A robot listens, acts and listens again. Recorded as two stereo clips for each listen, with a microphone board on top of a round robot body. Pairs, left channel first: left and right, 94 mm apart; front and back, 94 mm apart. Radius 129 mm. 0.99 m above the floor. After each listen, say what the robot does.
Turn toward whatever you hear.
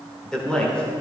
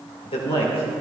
Turn 10° left.
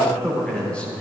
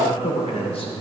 Turn 15° left.
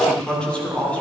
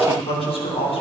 Turn 15° left.
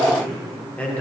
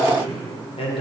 Turn 15° left.
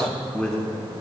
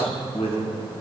Turn 10° left.
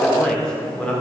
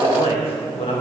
Turn 10° left.
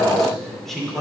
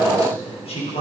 Found it: a man speaking, straight ahead, 2 to 4 m away.